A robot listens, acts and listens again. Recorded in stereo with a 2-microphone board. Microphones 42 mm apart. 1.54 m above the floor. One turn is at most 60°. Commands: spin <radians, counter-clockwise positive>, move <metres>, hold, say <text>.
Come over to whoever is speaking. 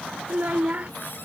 spin -0.70
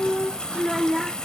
move 1.0
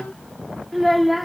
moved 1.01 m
move 1.0
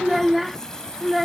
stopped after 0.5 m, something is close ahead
say Arrived at the child speaking, straight ahead.